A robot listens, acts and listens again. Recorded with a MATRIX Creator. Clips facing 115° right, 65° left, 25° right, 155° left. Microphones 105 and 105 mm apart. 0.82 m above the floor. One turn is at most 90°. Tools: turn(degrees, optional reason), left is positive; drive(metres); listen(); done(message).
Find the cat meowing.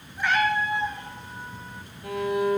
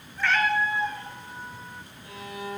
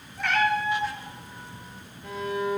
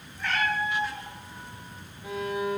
turn(degrees=-45, reason="The cat meowing: 45° right.")
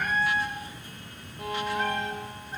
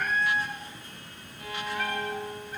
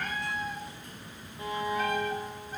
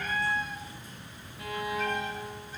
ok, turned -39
turn(degrees=-50, reason="The cat meowing is now 50° right.")
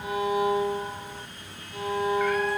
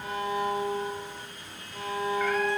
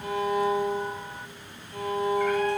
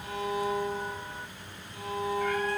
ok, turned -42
turn(degrees=-10, reason="Nothing new. It was at 10° right.")
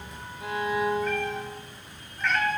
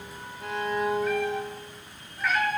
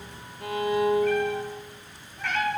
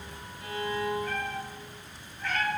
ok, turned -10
turn(degrees=-15, reason="The cat meowing is now 15° right.")
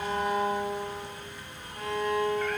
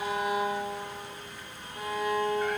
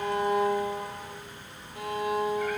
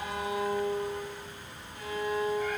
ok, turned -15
listen()
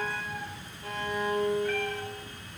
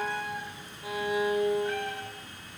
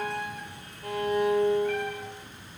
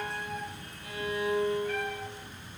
done("Facing the cat meowing.")